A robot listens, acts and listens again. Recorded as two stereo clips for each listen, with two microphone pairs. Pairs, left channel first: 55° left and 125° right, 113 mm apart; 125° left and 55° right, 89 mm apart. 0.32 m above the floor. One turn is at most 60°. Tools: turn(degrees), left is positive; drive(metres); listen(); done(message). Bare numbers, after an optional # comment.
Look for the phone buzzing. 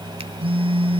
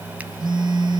# The phone buzzing: 85° right.
turn(-60)
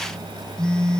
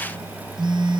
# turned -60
# The phone buzzing is now 25° right.
turn(-25)
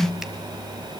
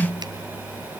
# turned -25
done("Found it: a phone buzzing, straight ahead, 2 to 4 m away.")